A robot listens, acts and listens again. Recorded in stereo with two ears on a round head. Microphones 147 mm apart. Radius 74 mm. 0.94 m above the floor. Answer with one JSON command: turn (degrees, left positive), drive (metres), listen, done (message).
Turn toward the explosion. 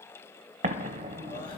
{"turn": -40}
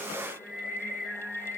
{"listen": true}
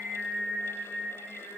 {"done": "I heard an explosion, but can't make it out now. It was about straight ahead or 100° right."}